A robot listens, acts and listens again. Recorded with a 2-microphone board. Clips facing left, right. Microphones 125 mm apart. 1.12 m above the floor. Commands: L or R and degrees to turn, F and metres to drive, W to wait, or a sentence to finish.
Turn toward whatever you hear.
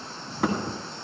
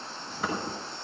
L70
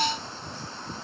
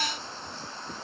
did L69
W
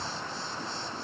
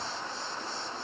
I heard a thud, but can't make it out now. It was about straight ahead or 45° left.